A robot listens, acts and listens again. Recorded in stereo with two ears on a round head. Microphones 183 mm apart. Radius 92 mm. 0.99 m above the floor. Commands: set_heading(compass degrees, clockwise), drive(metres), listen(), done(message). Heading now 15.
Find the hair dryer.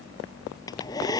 set_heading(355)
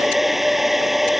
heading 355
done("Facing the hair dryer.")